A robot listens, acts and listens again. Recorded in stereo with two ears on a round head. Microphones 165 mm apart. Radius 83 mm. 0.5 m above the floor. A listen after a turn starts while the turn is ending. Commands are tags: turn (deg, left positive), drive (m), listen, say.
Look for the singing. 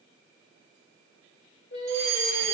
<turn deg="65"/>
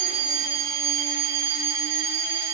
<listen/>
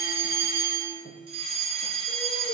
<listen/>
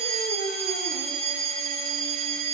<say>I heard singing, but can't make it out now. It was about straight ahead or 50° left.</say>